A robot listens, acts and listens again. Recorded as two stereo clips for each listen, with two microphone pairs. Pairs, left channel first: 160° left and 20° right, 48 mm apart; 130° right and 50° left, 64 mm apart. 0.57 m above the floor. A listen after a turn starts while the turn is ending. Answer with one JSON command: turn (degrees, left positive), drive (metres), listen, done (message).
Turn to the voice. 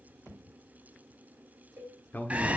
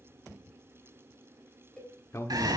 {"turn": -160}
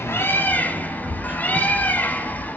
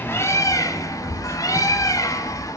{"listen": true}
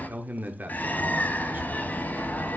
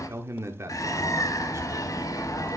{"turn": 15}
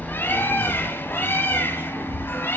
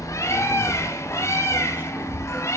{"listen": true}
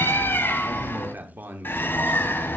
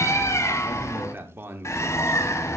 {"done": "Facing the man speaking."}